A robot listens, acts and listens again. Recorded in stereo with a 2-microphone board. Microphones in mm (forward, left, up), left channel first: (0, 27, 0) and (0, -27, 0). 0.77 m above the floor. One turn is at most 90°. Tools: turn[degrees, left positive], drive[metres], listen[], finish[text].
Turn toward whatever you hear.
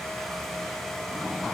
Action: listen[]
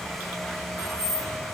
Action: turn[-90]
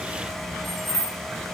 Action: finish[Found it: keys jangling, straight ahead.]